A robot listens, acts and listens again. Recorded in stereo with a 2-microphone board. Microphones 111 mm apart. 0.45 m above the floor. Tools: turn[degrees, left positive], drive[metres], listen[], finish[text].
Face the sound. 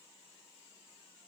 Action: listen[]
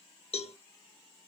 Thought: The cowbell: about 60° left or 120° left.
Action: turn[60]
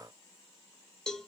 Action: finish[Facing the cowbell, under 1 m away.]